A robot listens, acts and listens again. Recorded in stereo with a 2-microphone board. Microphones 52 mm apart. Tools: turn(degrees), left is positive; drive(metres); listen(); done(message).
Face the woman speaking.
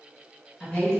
turn(degrees=15)
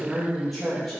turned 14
done("Facing the woman speaking.")